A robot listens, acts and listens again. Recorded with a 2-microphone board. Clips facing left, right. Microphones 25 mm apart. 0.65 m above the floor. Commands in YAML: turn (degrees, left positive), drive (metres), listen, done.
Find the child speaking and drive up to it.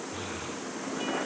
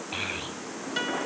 turn: -60
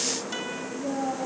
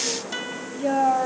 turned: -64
turn: -60
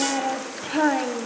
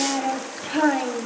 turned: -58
drive: 1.0
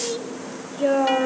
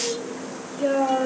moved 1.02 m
turn: 10
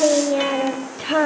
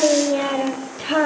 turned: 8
drive: 1.0
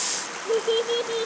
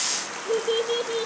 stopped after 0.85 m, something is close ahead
done: "I am next to the child speaking."